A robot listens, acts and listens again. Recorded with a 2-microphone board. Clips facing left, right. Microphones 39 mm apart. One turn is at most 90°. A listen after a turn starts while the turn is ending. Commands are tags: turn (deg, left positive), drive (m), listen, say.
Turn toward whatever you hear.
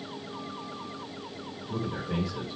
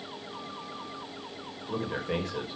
<turn deg="-50"/>
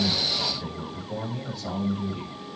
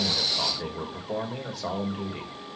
<turn deg="-80"/>
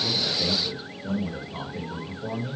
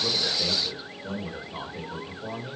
<say>Found it: a man speaking, straight ahead, 2 to 4 m away.</say>